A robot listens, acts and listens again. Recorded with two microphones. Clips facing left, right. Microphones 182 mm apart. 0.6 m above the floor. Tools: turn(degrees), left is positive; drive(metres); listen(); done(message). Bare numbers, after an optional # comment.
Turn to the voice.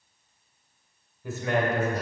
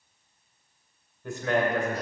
turn(30)
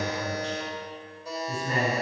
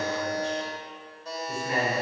# So it is at 140° left.
turn(140)
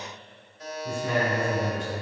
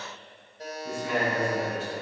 done("Facing the man speaking.")